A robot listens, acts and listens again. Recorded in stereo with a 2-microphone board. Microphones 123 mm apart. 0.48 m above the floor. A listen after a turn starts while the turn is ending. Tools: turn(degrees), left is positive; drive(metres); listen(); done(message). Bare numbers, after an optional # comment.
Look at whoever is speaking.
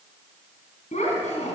# The child speaking: about 75° left or 105° left.
turn(75)
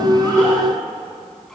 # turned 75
listen()
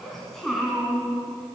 done("Found it: a child speaking, straight ahead.")